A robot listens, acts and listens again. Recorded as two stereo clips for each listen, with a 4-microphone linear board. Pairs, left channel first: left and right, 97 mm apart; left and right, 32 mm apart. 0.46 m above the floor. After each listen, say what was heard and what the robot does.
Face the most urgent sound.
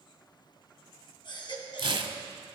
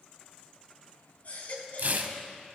The baby crying: about 55° left or 125° left. Turn 55° left.
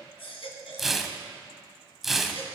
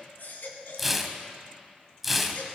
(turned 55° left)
So it is at 70° left. Turn 70° left.
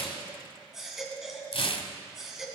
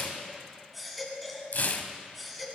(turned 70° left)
Found it: a baby crying, straight ahead, 2 to 4 m away.